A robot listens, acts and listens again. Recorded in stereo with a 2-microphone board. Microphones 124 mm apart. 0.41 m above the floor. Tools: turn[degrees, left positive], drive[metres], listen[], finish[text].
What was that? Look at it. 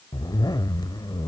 Thought: The zipper: about 35° left or 145° left.
Action: turn[35]
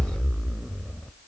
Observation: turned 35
Action: finish[Facing the zipper, under 1 m away.]